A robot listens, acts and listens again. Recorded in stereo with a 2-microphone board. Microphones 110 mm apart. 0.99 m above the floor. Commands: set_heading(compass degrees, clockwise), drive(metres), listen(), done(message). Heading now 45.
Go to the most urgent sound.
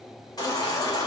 set_heading(5)
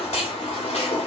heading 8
set_heading(263)
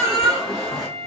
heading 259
drive(1.0)
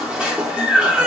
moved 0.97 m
set_heading(269)
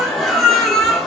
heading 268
drive(1.0)
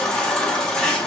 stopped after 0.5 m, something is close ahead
set_heading(258)
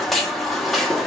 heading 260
done("I am next to the baby crying.")